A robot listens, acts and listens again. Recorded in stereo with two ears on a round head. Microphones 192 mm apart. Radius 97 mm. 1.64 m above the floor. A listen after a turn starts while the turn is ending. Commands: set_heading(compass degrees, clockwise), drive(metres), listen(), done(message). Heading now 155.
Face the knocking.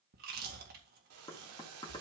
set_heading(135)
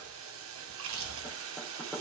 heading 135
done("Found it: knocking, straight ahead.")